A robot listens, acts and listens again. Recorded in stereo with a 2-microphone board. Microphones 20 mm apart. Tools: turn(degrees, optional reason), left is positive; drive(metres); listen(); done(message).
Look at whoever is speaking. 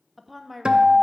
turn(degrees=30)
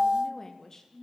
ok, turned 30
turn(degrees=150, reason="So it is at 150° left.")
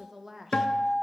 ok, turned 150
turn(degrees=-25, reason="The woman speaking is now 25° right.")
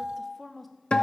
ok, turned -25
done("Found it: a woman speaking, straight ahead, 1 to 2 m away.")